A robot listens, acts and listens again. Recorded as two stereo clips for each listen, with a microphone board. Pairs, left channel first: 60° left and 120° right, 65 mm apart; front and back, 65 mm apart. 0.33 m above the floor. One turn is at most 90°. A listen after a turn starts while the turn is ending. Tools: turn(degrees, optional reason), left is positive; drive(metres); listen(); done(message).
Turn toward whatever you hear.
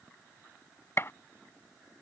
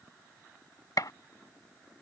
turn(degrees=15, reason="The gunshot: 15° left.")
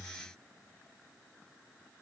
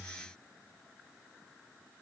done("Facing where the gunshot came from. I can't hear it now.")